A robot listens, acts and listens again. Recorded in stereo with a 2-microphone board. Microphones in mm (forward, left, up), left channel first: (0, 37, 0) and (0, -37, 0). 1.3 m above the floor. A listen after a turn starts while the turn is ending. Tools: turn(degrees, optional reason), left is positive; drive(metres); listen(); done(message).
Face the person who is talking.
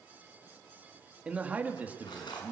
turn(degrees=-25, reason="The man speaking: about 25° right or 155° right.")
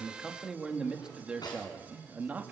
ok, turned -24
turn(degrees=-20, reason="The man speaking: about 20° right or 160° right.")
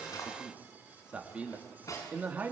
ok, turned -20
turn(degrees=-20, reason="The man speaking: about 20° right or 160° right.")
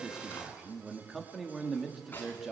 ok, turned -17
done("Facing the man speaking, 2 to 4 m away.")